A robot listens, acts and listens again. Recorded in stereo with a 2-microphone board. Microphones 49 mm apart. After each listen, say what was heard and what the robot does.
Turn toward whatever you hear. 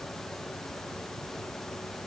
Keep listening.
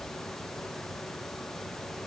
Keep listening.
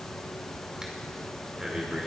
Turn 30° right.
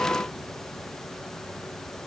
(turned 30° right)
Keep listening.
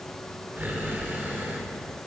So it is at 140° right. Turn 140° right.
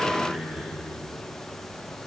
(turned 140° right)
The breathing is now 25° right. Turn 25° right.
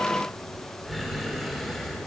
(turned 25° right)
Facing the breathing, 1 to 2 m away.